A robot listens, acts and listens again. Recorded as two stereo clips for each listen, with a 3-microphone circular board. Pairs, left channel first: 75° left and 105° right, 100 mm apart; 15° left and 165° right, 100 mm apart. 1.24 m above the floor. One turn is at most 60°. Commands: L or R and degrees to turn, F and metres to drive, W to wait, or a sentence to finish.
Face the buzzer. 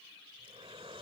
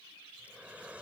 W
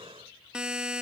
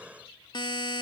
R25
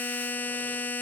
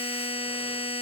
Facing the buzzer.